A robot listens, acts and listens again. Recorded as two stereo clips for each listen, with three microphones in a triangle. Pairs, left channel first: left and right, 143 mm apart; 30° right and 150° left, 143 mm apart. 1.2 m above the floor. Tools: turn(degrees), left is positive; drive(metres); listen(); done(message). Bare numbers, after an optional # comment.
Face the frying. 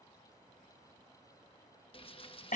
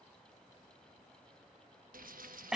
# The frying: 140° left.
turn(140)
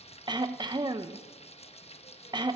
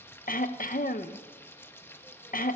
# The frying is now 45° left.
turn(45)
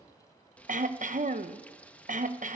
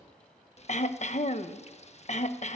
# The frying is now 10° left.
turn(10)
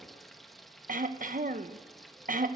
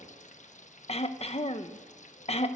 done("Found it: frying, straight ahead, 1 to 2 m away.")